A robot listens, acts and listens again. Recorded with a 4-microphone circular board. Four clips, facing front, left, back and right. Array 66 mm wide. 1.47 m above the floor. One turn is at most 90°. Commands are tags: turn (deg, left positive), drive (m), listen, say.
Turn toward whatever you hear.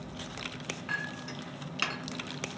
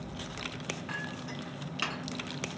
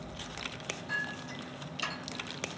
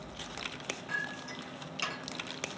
<turn deg="25"/>
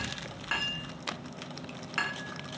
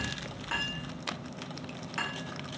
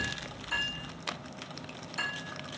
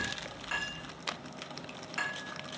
<turn deg="10"/>
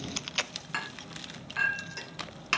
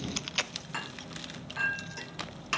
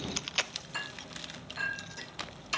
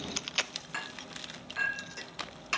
<say>Facing the clink.</say>